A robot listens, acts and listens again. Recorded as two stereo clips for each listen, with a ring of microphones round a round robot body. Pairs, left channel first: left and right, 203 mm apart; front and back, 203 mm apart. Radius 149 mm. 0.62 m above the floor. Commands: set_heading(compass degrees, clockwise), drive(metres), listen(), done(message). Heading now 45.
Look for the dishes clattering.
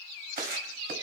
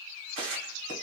set_heading(185)
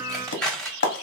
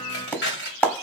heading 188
done("Facing the dishes clattering.")